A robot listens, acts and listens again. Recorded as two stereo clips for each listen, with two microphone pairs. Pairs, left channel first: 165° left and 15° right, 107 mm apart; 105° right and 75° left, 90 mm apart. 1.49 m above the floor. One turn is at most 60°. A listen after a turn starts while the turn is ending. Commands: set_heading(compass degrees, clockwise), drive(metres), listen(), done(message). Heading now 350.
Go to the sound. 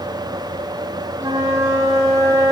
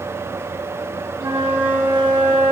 set_heading(305)
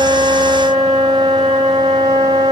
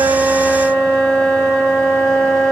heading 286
set_heading(306)
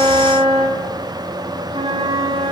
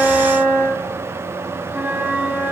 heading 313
drive(1.0)
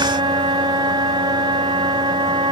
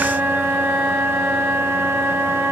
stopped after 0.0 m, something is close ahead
done("Something is in my way. I am facing the flute but have not reached it.")